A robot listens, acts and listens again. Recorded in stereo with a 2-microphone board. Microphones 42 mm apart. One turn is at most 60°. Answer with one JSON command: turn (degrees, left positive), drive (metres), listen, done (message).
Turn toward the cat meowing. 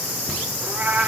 {"turn": -40}
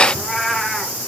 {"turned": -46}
{"done": "Found it: a cat meowing, straight ahead."}